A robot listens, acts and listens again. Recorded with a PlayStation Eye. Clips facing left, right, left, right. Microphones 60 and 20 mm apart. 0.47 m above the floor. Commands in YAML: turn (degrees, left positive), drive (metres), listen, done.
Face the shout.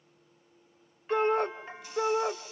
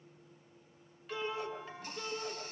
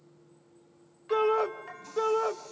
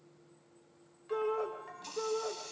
turn: 60
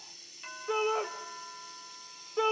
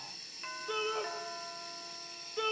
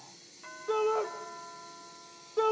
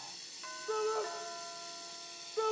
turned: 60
turn: 30
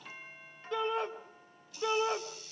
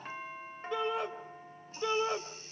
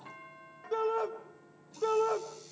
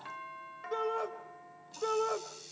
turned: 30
done: "Found it: a shout, straight ahead, 2 to 4 m away."